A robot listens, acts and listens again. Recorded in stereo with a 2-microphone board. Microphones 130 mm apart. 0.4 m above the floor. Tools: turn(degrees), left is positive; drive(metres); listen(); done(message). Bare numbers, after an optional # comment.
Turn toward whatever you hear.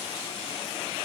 listen()
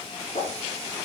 # The whoosh: about 65° left or 115° left.
turn(65)
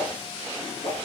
# So it is at 50° left.
turn(50)
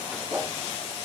# The whoosh is now 20° right.
turn(-20)
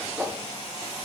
done("Facing the whoosh.")